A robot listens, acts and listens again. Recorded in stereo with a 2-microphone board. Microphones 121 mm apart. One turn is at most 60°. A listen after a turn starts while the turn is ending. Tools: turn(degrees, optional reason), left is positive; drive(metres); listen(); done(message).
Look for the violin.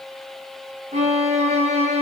turn(degrees=-60, reason="The violin: about 65° right or 115° right.")
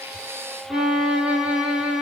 turn(degrees=-10, reason="So it is at 10° right.")
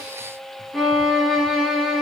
done("Found it: a violin, straight ahead, 2 to 4 m away.")